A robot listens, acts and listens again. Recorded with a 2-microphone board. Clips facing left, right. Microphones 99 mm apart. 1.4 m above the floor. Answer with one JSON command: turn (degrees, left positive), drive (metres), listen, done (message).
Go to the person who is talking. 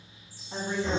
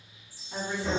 {"turn": 30}
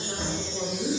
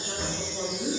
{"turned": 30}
{"drive": 1.0}
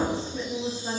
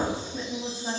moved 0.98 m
{"drive": 1.0}
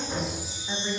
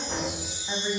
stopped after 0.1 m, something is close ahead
{"done": "Arrived at the woman speaking, straight ahead."}